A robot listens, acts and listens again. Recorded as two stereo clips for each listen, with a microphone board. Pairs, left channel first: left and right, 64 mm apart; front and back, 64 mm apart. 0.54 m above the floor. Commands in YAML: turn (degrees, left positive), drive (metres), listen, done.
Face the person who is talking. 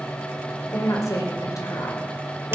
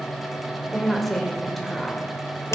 turn: 90
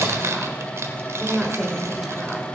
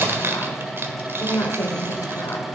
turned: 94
done: "Facing the woman speaking."